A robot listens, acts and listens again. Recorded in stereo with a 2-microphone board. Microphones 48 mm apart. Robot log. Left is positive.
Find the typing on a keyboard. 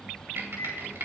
note: The typing on a keyboard: about 65° right or 115° right.
cmd yaw -65
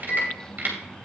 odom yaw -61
note: So it is at 50° right.
cmd yaw -50
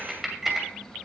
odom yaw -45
end: Facing the typing on a keyboard, 2 to 4 m away.